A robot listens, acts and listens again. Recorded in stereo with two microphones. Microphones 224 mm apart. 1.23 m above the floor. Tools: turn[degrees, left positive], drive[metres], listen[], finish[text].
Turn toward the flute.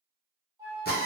Thought: The flute: about 15° right or 165° right.
Action: turn[-15]
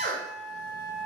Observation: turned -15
Action: finish[Facing the flute, 1 to 2 m away.]